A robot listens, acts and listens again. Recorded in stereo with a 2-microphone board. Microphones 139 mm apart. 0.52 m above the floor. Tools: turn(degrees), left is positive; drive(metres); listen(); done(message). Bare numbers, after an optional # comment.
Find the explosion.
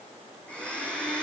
listen()
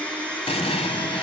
# The explosion: about 50° left or 130° left.
turn(50)
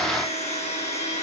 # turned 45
listen()
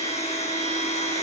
done("I heard an explosion, but can't make it out now. It was about 5° left or 85° left.")